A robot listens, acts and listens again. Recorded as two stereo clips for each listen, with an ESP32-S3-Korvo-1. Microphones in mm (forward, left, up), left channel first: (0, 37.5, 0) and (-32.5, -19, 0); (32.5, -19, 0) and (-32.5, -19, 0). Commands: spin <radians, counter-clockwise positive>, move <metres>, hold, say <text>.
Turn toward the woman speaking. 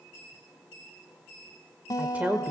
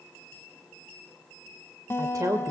spin 3.14
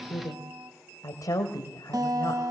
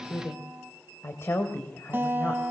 spin 0.87
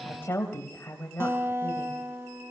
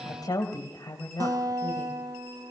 say Found it: a woman speaking, straight ahead.